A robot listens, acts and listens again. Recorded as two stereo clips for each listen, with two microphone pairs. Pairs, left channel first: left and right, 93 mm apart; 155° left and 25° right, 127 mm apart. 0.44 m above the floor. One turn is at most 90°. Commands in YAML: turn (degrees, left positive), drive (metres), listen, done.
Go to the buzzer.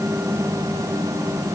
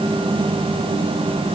listen: true
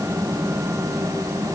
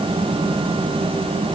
listen: true
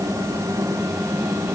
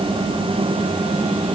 done: "I can't make out a buzzer."